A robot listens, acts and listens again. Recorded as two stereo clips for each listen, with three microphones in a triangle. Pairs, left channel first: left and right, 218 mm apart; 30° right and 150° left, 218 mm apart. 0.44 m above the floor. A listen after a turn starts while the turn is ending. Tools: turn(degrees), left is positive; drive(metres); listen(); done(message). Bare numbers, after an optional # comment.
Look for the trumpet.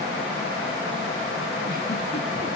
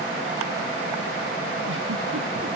listen()
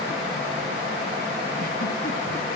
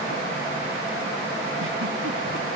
listen()
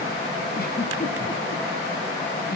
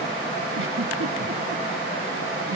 done("I can't make out a trumpet to turn to.")